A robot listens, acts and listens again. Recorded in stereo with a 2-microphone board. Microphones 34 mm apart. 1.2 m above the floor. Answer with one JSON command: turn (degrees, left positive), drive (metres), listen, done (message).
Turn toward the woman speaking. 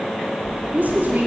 {"turn": -70}
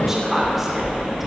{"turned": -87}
{"turn": -10}
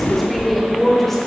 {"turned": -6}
{"turn": 10}
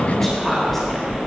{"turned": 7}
{"turn": 10}
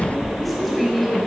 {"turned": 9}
{"done": "Facing the woman speaking, over 4 m away."}